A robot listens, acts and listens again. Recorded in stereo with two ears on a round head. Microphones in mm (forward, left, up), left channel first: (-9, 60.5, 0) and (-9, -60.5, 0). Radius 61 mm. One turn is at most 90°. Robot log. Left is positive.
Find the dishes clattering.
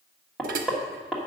note: The dishes clattering: about 70° right or 110° right.
cmd yaw -70
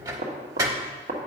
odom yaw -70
note: So it is at 25° right.
cmd yaw -25
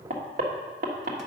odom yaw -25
cmd idle
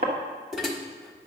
end: Facing the dishes clattering.